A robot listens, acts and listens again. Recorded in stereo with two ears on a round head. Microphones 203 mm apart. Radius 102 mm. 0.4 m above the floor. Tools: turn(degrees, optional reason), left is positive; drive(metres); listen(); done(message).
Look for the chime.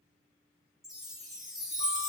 turn(degrees=30)
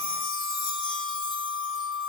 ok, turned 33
turn(degrees=150, reason="So it is at 150° left.")
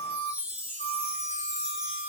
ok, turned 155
done("Found it: a chime, straight ahead, 1 to 2 m away.")